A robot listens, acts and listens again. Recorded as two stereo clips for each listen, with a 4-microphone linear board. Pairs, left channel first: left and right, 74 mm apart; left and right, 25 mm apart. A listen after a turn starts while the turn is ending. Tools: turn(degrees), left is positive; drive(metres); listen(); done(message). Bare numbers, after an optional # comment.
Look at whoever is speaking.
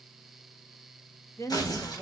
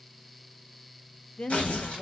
# The woman speaking: about 45° left or 135° left.
turn(45)
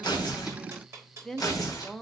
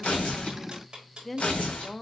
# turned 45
# So it is at 10° left.
turn(10)
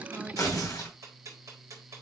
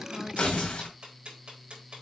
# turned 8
listen()
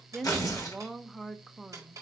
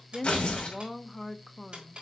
done("Facing the woman speaking.")